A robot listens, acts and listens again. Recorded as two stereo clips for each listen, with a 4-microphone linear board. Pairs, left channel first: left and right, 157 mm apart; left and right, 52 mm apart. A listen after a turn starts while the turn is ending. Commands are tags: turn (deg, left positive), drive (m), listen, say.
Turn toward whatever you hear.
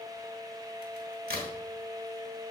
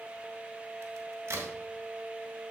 <turn deg="-90"/>
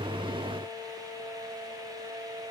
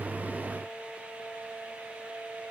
<say>I heard a crack from this way, but can't make it out now.</say>